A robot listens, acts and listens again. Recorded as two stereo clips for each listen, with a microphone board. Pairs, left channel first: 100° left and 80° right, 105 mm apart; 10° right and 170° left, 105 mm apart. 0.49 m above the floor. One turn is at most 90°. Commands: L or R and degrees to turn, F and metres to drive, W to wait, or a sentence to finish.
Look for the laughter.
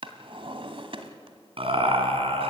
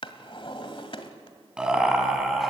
R90
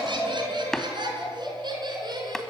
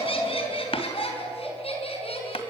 R30
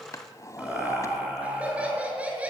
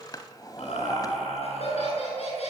Facing the laughter.